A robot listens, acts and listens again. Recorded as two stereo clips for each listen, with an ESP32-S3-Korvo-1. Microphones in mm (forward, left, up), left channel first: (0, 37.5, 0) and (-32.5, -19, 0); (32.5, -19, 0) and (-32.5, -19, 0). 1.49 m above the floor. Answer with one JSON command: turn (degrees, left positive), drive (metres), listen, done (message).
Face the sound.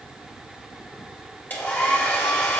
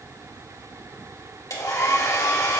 {"done": "Facing the hair dryer."}